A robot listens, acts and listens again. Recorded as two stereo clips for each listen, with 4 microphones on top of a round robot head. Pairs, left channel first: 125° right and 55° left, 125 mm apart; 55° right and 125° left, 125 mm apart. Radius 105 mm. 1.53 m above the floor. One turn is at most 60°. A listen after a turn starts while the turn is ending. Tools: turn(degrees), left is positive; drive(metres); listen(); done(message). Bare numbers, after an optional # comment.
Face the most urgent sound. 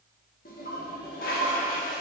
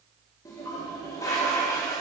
listen()
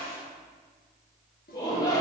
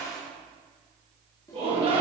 # The shout: 175° left.
turn(60)
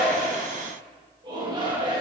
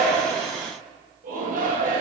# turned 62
# The shout is now 110° left.
turn(60)
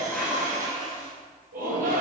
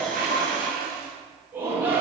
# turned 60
# The shout is now 50° left.
turn(50)
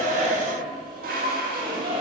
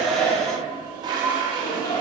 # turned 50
done("Found it: a shout, straight ahead, 2 to 4 m away.")